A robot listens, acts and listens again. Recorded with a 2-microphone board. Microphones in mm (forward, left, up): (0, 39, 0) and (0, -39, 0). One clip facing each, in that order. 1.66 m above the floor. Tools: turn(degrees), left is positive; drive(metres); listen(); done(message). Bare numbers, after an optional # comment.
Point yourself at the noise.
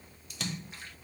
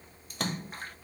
# The splash: about 45° right or 135° right.
turn(-45)
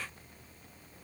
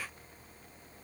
listen()
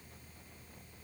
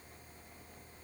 done("I heard a splash, but can't make it out now. It was about straight ahead or 90° right.")